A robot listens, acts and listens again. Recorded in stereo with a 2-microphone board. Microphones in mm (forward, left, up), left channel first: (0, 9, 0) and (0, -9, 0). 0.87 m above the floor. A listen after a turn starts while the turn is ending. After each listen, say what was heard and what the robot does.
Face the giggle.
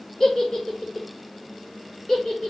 The giggle: about 35° left or 145° left. Turn 35° left.
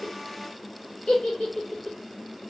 So it is at 105° left. Turn 105° left.
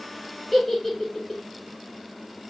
Found it: a giggle, straight ahead.